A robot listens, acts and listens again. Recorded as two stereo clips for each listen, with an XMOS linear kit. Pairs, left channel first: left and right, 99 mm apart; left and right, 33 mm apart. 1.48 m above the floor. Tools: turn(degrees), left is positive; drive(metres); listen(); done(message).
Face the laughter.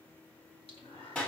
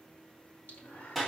turn(degrees=90)
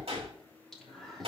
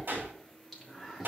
done("Facing the laughter, 2 to 4 m away.")